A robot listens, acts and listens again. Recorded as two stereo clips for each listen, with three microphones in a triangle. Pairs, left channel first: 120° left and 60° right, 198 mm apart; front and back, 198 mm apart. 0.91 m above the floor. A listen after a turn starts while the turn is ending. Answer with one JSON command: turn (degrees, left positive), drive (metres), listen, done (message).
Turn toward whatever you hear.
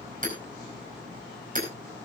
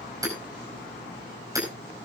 {"turn": -105}
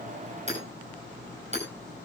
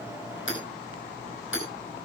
{"done": "Found it: hammering, straight ahead."}